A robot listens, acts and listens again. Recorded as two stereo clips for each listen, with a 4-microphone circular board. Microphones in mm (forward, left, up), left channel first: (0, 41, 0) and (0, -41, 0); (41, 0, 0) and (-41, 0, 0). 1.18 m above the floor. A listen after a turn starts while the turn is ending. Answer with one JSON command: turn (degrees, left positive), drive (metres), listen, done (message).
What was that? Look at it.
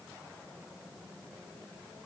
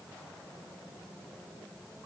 {"listen": true}
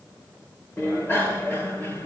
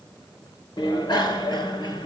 {"turn": 25}
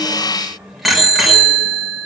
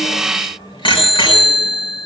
{"done": "Found it: a bicycle bell, straight ahead, 2 to 4 m away."}